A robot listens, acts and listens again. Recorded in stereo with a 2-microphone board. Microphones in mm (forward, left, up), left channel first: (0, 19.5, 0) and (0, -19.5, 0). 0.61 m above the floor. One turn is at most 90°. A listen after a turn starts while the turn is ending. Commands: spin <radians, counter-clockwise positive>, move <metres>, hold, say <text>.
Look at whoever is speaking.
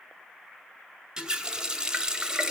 hold
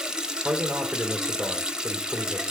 spin -1.22
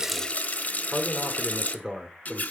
spin -0.44
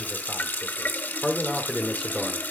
spin -0.17
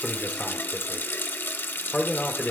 say Facing the man speaking, 1 to 2 m away.